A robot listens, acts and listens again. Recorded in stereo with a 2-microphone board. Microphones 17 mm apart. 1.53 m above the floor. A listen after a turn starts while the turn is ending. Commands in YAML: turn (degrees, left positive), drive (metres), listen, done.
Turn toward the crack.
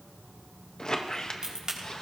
turn: -40
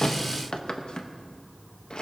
listen: true
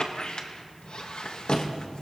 done: "I heard a crack, but can't make it out now. It was about straight ahead or 100° right."